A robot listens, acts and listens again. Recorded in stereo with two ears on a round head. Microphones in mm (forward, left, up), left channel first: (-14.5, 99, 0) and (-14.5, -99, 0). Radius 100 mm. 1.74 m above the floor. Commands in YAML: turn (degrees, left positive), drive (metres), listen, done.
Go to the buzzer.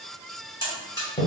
turn: 15
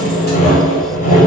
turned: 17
listen: true
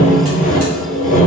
listen: true
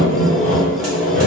done: "I heard a buzzer, but can't make it out now. It was about straight ahead or 145° left. I did not reach it."